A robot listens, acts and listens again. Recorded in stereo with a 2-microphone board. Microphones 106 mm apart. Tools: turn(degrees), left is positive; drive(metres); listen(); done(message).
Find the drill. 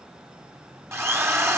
turn(degrees=-25)
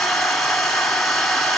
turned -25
done("Facing the drill, 1 to 2 m away.")